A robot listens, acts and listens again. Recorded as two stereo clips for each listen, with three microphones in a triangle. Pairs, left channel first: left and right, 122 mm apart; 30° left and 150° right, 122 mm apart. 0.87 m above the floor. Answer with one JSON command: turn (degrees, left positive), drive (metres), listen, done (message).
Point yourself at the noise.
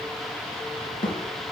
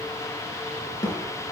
{"turn": 90}
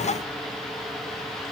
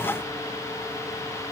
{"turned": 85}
{"done": "I heard a thud from this way, but can't make it out now."}